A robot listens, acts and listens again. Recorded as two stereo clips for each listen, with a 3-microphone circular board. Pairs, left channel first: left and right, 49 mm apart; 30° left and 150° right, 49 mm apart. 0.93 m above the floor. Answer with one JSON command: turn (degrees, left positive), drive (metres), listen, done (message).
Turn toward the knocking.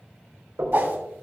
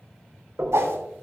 {"turn": -90}
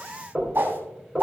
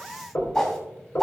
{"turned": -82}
{"done": "Found it: knocking, straight ahead."}